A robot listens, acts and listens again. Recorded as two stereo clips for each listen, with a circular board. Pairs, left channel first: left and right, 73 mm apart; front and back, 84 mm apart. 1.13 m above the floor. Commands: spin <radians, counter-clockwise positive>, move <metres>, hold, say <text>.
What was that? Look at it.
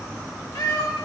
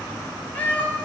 spin 1.31
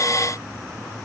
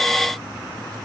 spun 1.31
hold
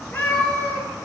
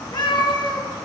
spin 0.52
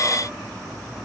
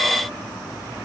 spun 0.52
hold
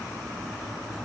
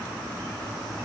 hold
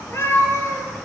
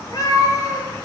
spin 0.79
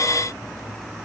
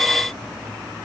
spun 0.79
hold
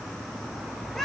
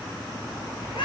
say Found it: a cat meowing, straight ahead, 2 to 4 m away.